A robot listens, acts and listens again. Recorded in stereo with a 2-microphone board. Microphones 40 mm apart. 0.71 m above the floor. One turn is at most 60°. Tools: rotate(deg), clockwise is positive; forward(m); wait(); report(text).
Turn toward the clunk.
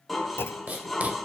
rotate(-60)
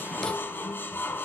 wait()
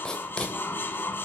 report("I heard a clunk, but can't make it out now. It was about 15° left or 45° left.")